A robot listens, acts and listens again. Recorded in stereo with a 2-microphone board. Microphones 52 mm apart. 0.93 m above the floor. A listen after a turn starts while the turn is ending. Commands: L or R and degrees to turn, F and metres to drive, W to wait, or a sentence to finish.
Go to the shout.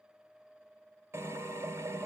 W
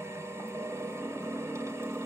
W
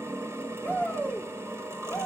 L35
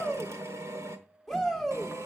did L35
F1.0
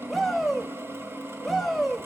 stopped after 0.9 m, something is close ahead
I am next to the shout.